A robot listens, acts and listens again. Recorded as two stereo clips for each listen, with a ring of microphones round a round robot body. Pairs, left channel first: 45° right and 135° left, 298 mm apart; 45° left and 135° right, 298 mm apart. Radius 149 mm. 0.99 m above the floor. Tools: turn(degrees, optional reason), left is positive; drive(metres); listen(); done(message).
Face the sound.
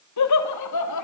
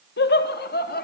turn(degrees=-15, reason="The laughter: 15° right.")
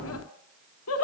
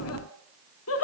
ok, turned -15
done("Found it: laughter, straight ahead.")